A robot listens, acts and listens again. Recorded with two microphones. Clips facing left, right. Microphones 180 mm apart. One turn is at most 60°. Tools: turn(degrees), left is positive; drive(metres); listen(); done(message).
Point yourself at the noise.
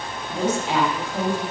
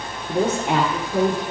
turn(degrees=-55)
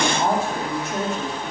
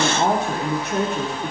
turn(degrees=-60)
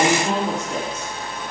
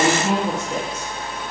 turn(degrees=-10)
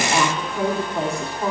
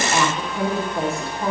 done("Found it: a woman speaking, straight ahead.")